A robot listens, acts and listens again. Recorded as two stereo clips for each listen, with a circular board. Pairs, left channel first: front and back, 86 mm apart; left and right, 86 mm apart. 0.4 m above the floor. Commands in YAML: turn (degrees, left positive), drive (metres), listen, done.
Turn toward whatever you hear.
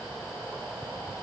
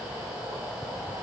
listen: true
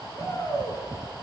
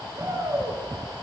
turn: -40
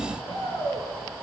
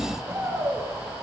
turn: -25
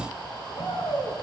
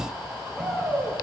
done: "Found it: a shout, straight ahead."